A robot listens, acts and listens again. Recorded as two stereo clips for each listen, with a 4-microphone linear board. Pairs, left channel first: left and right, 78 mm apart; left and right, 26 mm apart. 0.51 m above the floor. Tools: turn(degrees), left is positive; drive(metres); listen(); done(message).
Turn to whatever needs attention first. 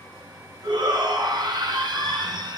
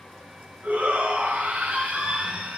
turn(degrees=-90)
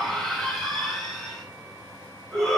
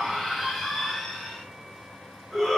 done("Found it: a shout, straight ahead, over 4 m away.")